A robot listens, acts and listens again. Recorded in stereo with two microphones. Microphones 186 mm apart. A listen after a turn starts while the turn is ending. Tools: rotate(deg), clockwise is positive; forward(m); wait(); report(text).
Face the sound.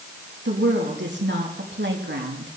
rotate(75)
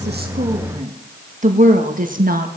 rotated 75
rotate(50)
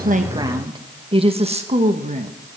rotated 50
rotate(40)
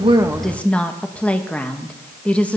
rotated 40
report("Found it: a woman speaking, straight ahead.")